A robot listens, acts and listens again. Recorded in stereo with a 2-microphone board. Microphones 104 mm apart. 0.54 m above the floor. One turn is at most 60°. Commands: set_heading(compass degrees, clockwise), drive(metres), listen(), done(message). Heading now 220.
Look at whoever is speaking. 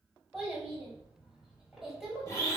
set_heading(250)
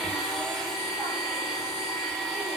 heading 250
listen()
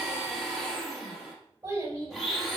set_heading(310)
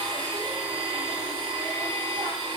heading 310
set_heading(10)
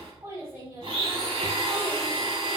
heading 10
set_heading(35)
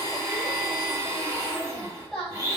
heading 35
done("Found it: a child speaking, straight ahead, 1 to 2 m away.")